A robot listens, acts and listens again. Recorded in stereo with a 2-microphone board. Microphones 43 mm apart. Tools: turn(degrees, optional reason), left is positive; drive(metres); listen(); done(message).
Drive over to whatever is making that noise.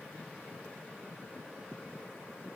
listen()
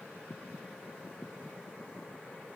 listen()
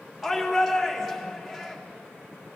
turn(degrees=-30)
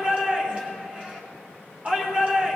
turn(degrees=-145, reason="So it is at 145° right.")
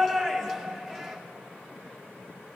turn(degrees=10, reason="The shout is now 10° left.")
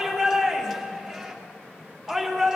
drive(metres=1.0)
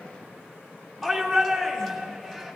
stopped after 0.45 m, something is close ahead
done("Something is in my way. I am facing the shout but have not reached it.")